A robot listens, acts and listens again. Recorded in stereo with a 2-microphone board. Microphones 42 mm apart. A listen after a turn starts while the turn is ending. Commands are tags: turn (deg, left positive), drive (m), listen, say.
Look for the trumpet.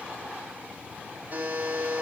<listen/>
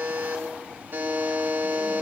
<listen/>
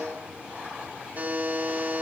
<say>I can't make out a trumpet, only a buzzer.</say>